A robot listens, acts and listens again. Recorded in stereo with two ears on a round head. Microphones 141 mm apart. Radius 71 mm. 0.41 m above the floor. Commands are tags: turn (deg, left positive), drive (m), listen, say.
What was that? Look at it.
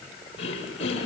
<turn deg="40"/>
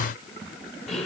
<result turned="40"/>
<say>Facing the throat clearing.</say>